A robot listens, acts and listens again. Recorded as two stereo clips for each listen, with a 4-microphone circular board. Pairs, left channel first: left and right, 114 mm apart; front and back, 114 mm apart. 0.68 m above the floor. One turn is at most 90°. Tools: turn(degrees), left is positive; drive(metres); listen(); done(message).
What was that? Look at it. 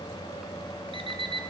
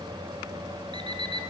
turn(degrees=-90)
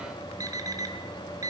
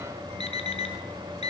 turn(degrees=-30)
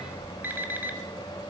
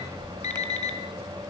turn(degrees=-15)
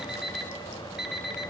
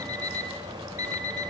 done("Found it: an alarm clock, straight ahead, 2 to 4 m away.")